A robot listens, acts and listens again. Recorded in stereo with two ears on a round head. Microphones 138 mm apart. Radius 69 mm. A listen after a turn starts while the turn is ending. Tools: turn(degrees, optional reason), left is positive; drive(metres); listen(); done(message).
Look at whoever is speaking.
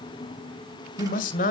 turn(degrees=50, reason="The man speaking: about 50° left or 130° left.")
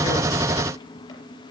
listen()
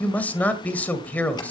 turn(degrees=10, reason="So it is at 10° left.")
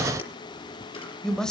done("Found it: a man speaking, straight ahead.")